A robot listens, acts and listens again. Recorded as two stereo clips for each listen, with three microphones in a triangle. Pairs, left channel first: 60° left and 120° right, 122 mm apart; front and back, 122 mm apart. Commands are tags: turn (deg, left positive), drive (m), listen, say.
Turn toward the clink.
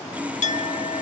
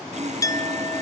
<turn deg="65"/>
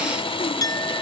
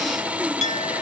<say>Found it: a clink, straight ahead, 1 to 2 m away.</say>